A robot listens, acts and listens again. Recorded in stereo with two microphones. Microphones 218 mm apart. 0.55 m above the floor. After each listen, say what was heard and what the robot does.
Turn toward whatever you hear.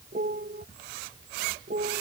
The piano: about 45° right or 135° right. Turn 45° right.
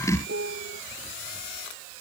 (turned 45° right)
So it is at 90° right. Turn 90° right.
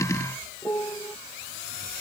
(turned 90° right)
The piano is now 15° left. Turn 15° left.
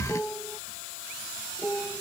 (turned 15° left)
Facing the piano.